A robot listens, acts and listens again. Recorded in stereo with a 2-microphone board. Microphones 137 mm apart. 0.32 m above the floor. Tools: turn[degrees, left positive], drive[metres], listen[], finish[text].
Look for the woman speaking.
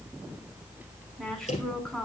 Action: turn[30]
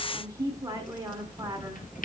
Thought: So it is at 25° right.
Action: turn[-25]
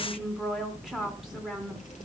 Action: finish[Found it: a woman speaking, straight ahead.]